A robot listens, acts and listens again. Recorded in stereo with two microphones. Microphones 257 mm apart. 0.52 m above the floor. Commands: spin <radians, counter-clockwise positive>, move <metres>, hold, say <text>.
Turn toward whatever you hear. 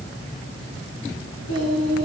spin -1.31
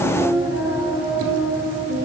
spin -0.44
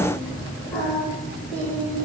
say Found it: singing, straight ahead, over 4 m away.